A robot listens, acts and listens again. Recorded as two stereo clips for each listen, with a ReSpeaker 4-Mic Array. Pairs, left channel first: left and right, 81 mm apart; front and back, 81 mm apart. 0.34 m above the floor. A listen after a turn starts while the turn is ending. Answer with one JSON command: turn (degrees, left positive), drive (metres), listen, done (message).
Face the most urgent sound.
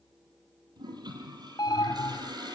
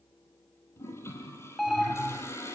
{"turn": 90}
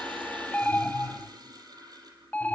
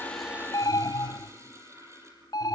{"turn": 20}
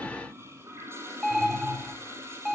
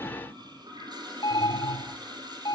{"done": "Facing the alarm, 1 to 2 m away."}